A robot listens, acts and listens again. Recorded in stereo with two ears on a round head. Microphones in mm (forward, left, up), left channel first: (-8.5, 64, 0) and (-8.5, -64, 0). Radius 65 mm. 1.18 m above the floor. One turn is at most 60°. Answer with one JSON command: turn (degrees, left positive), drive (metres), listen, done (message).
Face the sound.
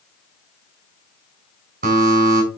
{"turn": -60}
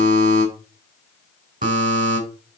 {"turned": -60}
{"turn": -55}
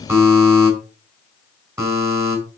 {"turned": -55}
{"turn": -20}
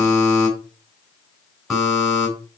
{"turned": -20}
{"done": "Found it: a buzzer, straight ahead, over 4 m away."}